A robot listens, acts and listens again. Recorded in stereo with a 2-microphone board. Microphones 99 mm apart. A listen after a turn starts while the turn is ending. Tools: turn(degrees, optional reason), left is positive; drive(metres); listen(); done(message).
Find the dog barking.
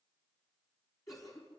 listen()
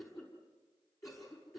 listen()
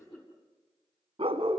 turn(degrees=-65, reason="The dog barking: about 65° right or 115° right.")
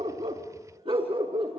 turn(degrees=-65, reason="So it is at 65° right.")
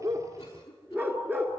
turn(degrees=-20, reason="The dog barking is now 20° right.")
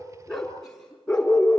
turn(degrees=10, reason="The dog barking is now 10° left.")
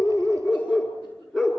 done("Found it: a dog barking, straight ahead.")